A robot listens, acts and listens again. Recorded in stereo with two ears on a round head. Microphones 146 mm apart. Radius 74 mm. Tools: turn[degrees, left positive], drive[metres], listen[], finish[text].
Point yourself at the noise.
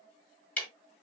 Action: turn[30]
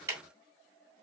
Thought: So it is at 20° right.
Action: turn[-20]
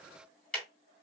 Action: finish[Facing the ticking.]